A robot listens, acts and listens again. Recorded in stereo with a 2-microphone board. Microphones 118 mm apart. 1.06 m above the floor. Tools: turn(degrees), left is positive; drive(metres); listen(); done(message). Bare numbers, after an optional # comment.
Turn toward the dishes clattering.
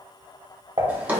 # The dishes clattering: about 45° right or 135° right.
turn(-45)
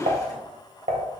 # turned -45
# So it is at 95° right.
turn(-95)
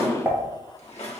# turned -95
# The dishes clattering is now 15° right.
turn(-15)
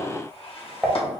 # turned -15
done("Found it: dishes clattering, straight ahead, under 1 m away.")